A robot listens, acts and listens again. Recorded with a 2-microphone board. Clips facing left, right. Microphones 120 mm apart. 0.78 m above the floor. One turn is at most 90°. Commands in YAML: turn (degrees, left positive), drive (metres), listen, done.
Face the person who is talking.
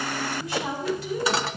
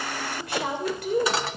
turn: -60
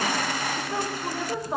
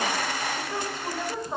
turn: 10
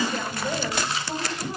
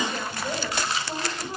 done: "Found it: a woman speaking, straight ahead, over 4 m away."